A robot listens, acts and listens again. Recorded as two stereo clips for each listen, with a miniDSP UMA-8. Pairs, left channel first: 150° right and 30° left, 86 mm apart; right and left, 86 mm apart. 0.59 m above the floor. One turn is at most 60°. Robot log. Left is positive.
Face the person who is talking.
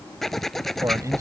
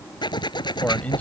note: The man speaking: 15° right.
cmd yaw -15
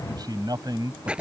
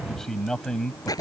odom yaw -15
note: The man speaking is now 10° right.
cmd yaw -10
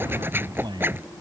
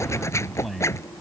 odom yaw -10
end: Found it: a man speaking, straight ahead.